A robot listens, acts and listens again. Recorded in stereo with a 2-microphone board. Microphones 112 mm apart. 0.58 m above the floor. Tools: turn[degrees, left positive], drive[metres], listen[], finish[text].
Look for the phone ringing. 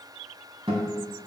Action: listen[]
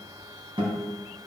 Action: listen[]
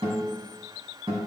Action: finish[I can't make out a phone ringing to turn to.]